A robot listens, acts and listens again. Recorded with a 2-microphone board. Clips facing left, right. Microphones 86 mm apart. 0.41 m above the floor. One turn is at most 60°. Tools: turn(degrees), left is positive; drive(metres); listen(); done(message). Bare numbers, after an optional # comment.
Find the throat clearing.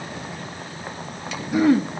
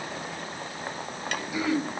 # The throat clearing: about 50° left or 130° left.
turn(50)
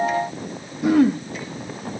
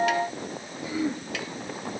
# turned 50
# So it is at 75° left.
turn(60)
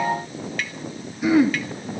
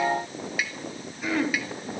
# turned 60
# The throat clearing is now 10° left.
turn(10)
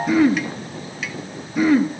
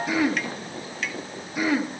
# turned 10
done("Facing the throat clearing.")